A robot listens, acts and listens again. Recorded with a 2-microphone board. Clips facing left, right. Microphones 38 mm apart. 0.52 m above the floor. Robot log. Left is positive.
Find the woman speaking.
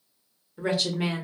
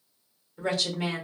cmd yaw +30
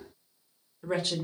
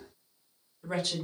note: So it is at 135° left.
cmd yaw +135
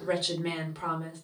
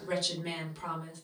note: The woman speaking is now 35° left.
cmd yaw +35
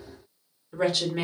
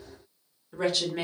end: Facing the woman speaking, 1 to 2 m away.